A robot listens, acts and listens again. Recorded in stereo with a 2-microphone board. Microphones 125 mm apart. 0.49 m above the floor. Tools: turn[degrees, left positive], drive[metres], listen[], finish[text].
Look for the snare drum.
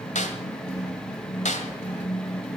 Thought: The snare drum: about 75° left or 105° left.
Action: turn[75]
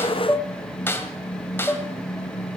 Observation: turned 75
Thought: So it is at 20° left.
Action: turn[20]
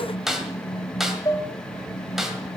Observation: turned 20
Action: finish[Found it: a snare drum, straight ahead.]